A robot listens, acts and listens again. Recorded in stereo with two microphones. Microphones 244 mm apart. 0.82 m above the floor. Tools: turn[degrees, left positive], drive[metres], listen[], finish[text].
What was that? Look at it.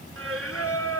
Thought: The singing: about 70° right or 110° right.
Action: turn[-70]
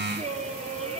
Thought: So it is at 25° right.
Action: turn[-25]
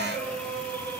Action: finish[Facing the singing.]